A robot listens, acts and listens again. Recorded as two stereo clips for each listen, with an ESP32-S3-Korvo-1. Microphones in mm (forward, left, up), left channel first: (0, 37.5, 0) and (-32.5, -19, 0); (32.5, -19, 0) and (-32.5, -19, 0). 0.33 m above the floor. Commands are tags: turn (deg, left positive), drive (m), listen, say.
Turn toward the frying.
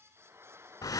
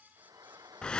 <turn deg="-170"/>
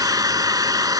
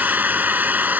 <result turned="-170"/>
<listen/>
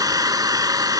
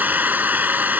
<listen/>
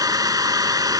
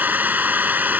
<say>Facing where the frying came from. I can't hear it now.</say>